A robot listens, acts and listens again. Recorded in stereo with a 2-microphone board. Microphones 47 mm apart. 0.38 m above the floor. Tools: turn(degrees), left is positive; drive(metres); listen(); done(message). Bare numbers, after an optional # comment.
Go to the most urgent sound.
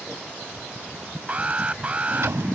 # The alarm: about 30° right or 150° right.
turn(-30)
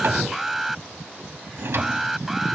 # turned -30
drive(1.0)
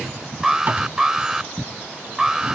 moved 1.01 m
# The alarm is now 15° right.
turn(-15)
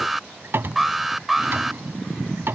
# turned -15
drive(1.0)
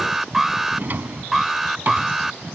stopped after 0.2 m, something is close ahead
# The alarm is now 10° right.
turn(-10)
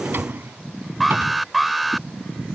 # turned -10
done("Arrived at the alarm, straight ahead.")